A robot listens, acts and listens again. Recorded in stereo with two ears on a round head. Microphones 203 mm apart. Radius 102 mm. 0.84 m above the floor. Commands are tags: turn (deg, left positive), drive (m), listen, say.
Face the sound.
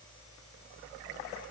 <listen/>
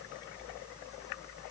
<listen/>
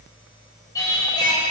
<turn deg="20"/>
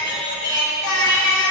<turn deg="120"/>
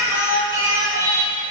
<turn deg="-15"/>
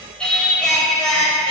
<say>Facing the singing.</say>